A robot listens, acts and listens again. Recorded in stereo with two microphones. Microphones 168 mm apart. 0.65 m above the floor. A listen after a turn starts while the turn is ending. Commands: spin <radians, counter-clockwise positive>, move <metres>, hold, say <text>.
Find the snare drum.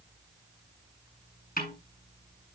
spin 1.05
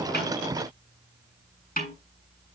spin 0.96
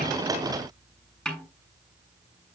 say Found it: a snare drum, straight ahead, over 4 m away.